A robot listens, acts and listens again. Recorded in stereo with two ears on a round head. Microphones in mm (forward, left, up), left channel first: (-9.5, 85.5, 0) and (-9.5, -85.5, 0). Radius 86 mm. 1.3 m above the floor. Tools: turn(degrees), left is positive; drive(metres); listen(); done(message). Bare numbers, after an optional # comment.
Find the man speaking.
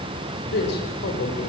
# The man speaking: about 50° left or 130° left.
turn(50)
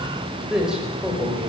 done("Facing the man speaking, over 4 m away.")